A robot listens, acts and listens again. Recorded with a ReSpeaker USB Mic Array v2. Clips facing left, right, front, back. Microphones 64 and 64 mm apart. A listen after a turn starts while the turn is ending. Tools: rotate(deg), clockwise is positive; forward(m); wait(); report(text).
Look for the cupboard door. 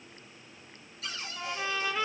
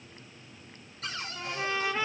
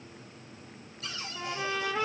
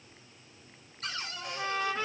rotate(135)
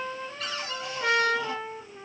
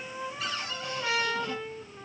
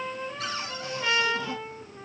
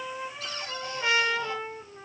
wait()
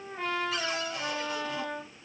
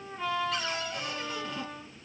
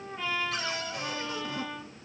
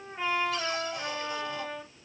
wait()
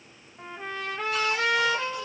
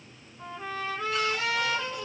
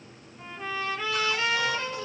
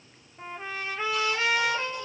report("Facing where the cupboard door came from. I can't hear it now.")